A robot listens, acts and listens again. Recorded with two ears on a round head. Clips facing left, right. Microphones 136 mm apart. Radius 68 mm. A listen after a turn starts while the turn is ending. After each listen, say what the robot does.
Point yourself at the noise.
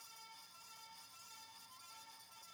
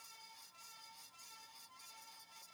Keep listening.
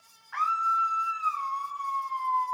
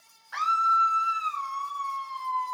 Turn 45° right.
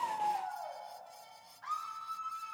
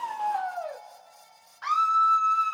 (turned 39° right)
Turn 95° right.
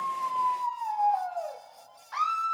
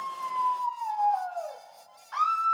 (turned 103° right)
Facing the scream, under 1 m away.